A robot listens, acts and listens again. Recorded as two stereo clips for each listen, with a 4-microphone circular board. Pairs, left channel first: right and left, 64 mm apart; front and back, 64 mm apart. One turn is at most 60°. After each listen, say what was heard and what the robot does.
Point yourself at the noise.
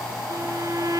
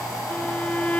The violin: 70° left. Turn 60° left.
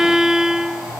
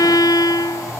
Facing the violin.